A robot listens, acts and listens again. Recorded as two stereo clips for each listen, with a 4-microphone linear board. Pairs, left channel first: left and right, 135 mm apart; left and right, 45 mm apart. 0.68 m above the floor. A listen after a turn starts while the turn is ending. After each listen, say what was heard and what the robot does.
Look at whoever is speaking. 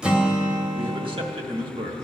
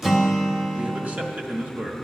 The man speaking: about 35° right or 145° right. Turn 35° right.
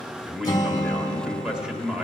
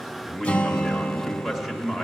Facing the man speaking.